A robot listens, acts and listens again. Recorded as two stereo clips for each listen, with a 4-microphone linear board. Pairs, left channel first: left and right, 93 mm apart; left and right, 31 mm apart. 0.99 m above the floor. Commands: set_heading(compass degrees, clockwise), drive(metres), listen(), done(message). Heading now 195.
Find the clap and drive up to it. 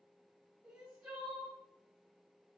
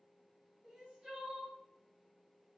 listen()
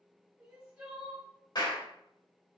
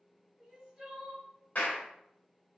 set_heading(150)
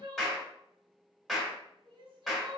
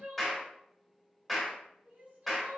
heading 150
drive(1.0)
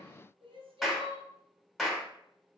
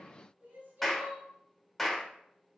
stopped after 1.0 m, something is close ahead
done("Arrived at the clap, straight ahead.")